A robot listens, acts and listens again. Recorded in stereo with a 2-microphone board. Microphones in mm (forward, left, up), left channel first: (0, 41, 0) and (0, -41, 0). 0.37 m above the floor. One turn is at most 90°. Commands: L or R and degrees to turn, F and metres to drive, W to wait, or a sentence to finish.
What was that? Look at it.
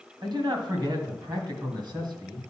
R60
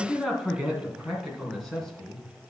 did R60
Found it: a man speaking, straight ahead, 2 to 4 m away.